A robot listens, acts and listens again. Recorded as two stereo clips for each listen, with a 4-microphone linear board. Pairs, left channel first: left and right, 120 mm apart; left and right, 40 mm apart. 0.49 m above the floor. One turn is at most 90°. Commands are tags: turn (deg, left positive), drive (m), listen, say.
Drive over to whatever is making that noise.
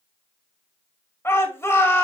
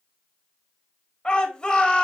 <turn deg="20"/>
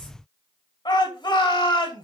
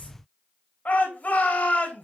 <turn deg="90"/>
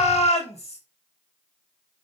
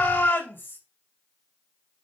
<turn deg="80"/>
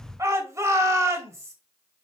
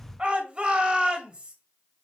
<turn deg="-30"/>
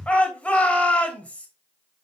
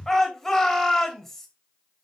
<turn deg="10"/>
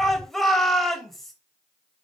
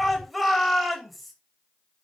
<drive m="1.0"/>
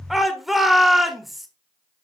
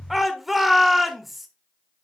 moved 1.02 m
<drive m="1.0"/>
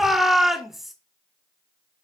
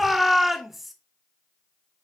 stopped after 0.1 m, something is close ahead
<say>Arrived at the shout, straight ahead.</say>